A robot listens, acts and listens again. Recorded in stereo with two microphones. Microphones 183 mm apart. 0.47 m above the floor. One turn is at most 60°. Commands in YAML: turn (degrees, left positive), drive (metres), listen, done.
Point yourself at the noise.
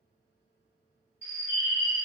turn: 40
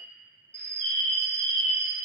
turn: 60
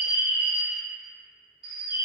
turn: 25
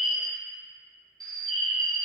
done: "Facing the bird, 1 to 2 m away."